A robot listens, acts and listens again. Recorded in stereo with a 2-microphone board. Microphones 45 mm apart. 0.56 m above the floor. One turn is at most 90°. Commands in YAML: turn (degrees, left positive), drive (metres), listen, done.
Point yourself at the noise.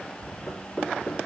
turn: 30
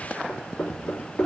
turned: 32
turn: 90
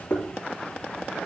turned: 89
turn: 55
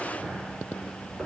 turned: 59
listen: true
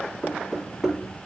done: "Facing the knocking."